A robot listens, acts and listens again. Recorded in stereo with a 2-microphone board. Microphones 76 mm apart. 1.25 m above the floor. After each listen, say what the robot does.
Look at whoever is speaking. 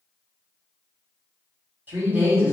Turn 25° right.
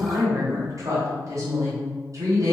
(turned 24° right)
Turn 130° right.
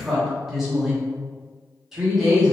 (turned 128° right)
Found it: a woman speaking, straight ahead.